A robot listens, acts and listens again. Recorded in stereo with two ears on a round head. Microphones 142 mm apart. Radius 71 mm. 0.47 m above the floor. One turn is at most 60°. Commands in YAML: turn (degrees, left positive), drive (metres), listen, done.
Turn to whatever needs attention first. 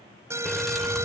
turn: -20
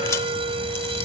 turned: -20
turn: -60
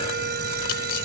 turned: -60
turn: -60
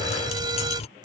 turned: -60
turn: -30
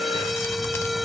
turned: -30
done: "Facing the alarm."